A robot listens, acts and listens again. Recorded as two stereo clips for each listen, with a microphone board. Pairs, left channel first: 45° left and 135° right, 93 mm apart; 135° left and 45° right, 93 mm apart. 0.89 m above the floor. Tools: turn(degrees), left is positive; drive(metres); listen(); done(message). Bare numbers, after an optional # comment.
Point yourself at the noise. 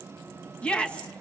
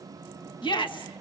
# The shout: 120° left.
turn(120)
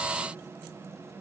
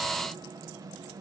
listen()
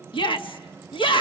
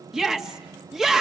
# The shout is now 40° left.
turn(40)
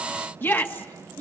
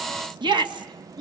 # The shout is now 20° right.
turn(-20)
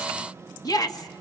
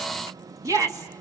done("Facing the shout, 1 to 2 m away.")